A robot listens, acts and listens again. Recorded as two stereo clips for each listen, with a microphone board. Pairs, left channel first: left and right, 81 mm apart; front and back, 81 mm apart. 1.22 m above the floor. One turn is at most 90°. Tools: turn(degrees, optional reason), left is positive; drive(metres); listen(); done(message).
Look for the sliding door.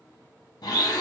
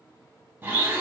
listen()
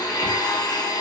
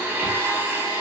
listen()
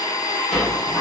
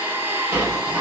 turn(degrees=90, reason="The sliding door: 175° left.")
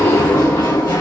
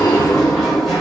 turn(degrees=90, reason="The sliding door is now 90° left.")
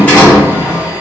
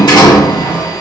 turn(degrees=20, reason="The sliding door is now 20° left.")
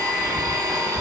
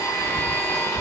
done("Facing the sliding door.")